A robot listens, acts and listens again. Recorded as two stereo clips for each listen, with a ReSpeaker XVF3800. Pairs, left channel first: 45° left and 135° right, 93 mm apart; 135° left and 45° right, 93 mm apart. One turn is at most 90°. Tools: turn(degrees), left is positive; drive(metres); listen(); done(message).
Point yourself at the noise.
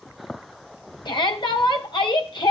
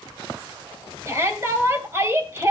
turn(degrees=15)
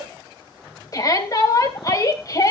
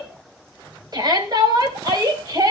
done("Facing the shout, 2 to 4 m away.")